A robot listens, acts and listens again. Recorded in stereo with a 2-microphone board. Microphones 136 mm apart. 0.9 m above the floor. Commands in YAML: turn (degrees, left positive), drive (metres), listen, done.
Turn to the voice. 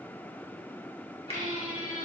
listen: true
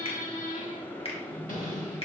listen: true
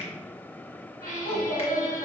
turn: 55
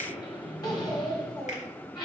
turn: 60
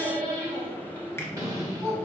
done: "Facing the child speaking, 2 to 4 m away."